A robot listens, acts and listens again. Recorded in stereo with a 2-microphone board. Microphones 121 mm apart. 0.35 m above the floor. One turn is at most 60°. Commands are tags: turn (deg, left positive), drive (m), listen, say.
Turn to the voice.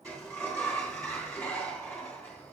<listen/>
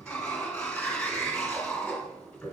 <listen/>
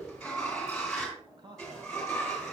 <turn deg="-40"/>
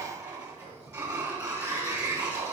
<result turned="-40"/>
<listen/>
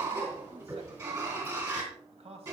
<turn deg="-60"/>
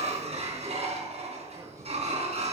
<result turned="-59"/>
<turn deg="-30"/>
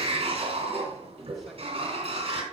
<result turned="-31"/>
<listen/>
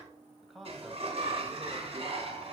<say>Found it: a man speaking, straight ahead.</say>